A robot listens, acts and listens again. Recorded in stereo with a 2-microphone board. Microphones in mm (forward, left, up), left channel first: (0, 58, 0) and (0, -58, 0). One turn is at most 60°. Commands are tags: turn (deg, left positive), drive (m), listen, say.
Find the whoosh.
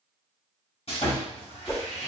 <turn deg="20"/>
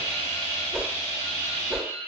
<say>Facing the whoosh, under 1 m away.</say>